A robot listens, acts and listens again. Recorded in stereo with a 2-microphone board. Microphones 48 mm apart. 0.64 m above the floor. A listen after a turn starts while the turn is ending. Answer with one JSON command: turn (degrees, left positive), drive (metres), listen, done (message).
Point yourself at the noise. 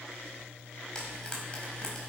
{"turn": 20}
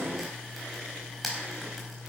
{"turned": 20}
{"done": "Facing the frying, over 4 m away."}